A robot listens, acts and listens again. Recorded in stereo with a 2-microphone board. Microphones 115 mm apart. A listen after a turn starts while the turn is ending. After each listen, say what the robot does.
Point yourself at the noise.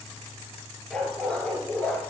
Turn 30° left.
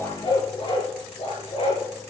Turn 120° left.
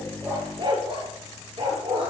Turn 55° right.
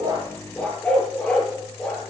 Turn 10° left.
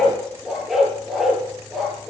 Found it: a dog barking, straight ahead.